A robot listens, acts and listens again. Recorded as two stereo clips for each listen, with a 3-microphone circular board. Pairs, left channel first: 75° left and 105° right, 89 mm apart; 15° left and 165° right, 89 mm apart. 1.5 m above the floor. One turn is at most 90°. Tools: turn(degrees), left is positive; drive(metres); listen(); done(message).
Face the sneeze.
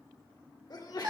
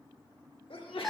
turn(degrees=30)
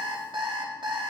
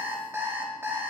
done("Facing where the sneeze came from. I can't hear it now.")